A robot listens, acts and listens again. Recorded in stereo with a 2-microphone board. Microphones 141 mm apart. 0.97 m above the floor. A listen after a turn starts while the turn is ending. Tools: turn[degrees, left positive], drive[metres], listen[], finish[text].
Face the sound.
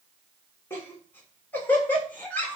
Action: turn[30]
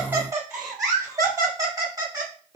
Thought: So it is at 25° right.
Action: turn[-25]
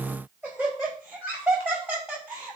Thought: The laughter is now 15° right.
Action: turn[-15]
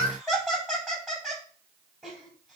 Action: finish[Found it: laughter, straight ahead, over 4 m away.]